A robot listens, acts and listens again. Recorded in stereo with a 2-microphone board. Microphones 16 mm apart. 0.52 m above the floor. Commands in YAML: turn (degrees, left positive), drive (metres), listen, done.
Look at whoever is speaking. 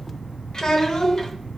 turn: 50
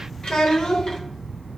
turn: 85
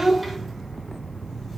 done: "Found it: a child speaking, straight ahead, under 1 m away."